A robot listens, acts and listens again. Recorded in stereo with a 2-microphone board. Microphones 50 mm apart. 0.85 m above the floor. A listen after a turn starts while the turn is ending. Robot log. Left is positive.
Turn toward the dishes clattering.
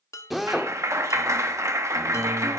cmd yaw +90
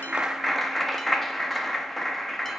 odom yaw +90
cmd idle
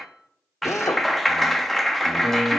end: Found it: dishes clattering, straight ahead, under 1 m away.